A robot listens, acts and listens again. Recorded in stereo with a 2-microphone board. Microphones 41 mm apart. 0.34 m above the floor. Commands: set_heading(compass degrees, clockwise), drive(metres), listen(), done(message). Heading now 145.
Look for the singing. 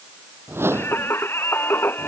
set_heading(85)
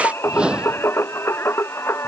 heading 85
set_heading(0)
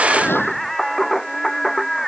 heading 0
done("Found it: singing, straight ahead.")